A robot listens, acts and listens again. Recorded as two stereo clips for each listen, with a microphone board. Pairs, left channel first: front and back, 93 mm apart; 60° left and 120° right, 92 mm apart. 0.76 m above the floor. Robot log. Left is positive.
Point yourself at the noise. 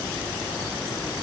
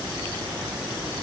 cmd idle
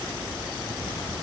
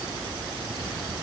cmd idle
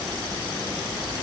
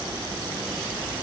end: I can't make out anything.